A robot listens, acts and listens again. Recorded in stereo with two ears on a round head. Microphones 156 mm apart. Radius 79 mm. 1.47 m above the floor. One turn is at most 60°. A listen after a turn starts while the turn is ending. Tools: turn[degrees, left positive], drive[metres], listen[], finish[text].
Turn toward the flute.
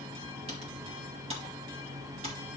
Action: listen[]
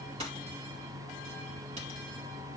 Action: listen[]
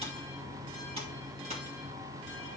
Action: finish[I can't make out a flute to turn to.]